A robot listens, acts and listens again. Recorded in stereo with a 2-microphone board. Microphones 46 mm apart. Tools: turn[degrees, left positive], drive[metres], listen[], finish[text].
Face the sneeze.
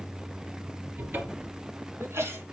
Thought: The sneeze: about 70° right or 110° right.
Action: turn[-70]
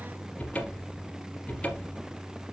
Action: listen[]
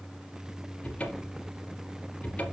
Action: finish[I heard a sneeze, but can't make it out now. It was about straight ahead or 40° right.]